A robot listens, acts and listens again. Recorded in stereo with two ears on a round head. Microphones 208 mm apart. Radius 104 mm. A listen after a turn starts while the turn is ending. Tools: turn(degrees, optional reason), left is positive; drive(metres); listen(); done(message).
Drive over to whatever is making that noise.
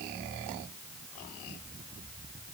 listen()
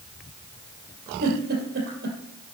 turn(degrees=-50, reason="The giggle: about 50° right or 130° right.")
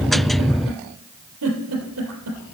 turn(degrees=-80, reason="So it is at 80° right.")
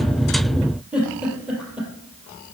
drive(metres=1.0)
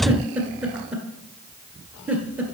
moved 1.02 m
drive(metres=1.0)
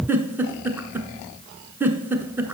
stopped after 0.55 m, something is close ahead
turn(degrees=-10, reason="The giggle is now 10° right.")
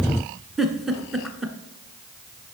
done("I am next to the giggle.")